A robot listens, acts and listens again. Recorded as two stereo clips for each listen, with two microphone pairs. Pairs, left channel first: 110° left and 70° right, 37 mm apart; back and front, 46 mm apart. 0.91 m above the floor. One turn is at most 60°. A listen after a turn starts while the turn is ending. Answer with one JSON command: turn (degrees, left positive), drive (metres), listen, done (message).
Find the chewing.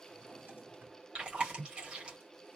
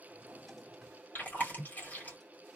{"turn": -60}
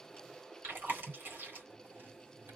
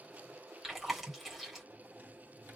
{"turn": -60}
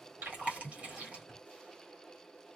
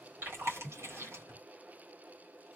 {"turn": -20}
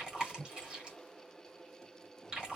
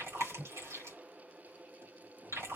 {"done": "Facing the chewing."}